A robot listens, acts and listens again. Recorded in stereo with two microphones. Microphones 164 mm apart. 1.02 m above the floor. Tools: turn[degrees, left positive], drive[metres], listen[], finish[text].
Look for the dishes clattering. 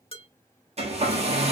Thought: The dishes clattering: about 35° left or 145° left.
Action: turn[35]
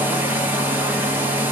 Action: listen[]
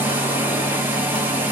Action: listen[]
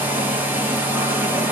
Action: finish[I heard dishes clattering, but can't make it out now. It was about straight ahead or 110° left.]